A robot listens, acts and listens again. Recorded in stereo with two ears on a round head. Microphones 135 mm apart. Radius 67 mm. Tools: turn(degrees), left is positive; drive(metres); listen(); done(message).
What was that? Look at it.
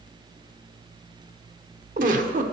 turn(degrees=-55)
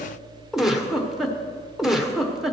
done("Facing the giggle.")